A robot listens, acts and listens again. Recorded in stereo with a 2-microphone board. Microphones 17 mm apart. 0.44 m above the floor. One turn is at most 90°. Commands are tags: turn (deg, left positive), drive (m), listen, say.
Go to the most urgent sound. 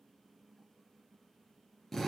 <listen/>
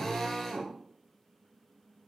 <listen/>
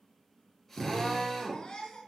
<turn deg="45"/>
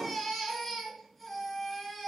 <drive m="1.0"/>
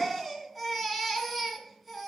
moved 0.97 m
<drive m="1.0"/>
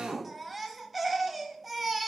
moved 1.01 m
<turn deg="-10"/>
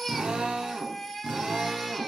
<drive m="1.0"/>
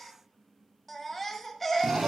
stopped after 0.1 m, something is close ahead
<turn deg="10"/>
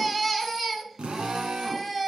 <say>I am next to the baby crying.</say>